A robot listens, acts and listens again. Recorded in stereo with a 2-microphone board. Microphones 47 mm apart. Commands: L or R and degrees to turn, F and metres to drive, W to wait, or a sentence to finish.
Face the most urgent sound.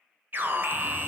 R40
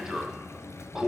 R10
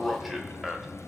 Facing the alarm.